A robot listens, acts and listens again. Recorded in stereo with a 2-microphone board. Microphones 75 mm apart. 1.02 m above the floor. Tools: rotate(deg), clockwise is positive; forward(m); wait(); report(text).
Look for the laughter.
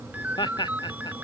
rotate(-90)
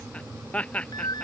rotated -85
rotate(-15)
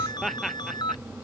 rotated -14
report("Found it: laughter, straight ahead.")